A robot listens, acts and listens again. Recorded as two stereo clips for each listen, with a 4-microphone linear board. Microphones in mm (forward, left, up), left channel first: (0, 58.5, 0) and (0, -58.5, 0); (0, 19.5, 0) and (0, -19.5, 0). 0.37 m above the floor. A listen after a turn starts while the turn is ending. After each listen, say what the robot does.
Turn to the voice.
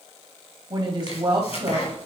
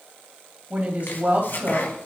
Turn 40° right.
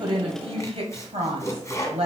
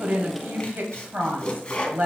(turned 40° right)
Turn 85° right.
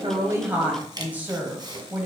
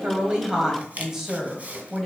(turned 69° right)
Turn 15° right.
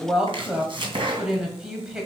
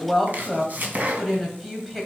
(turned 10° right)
Facing the woman speaking.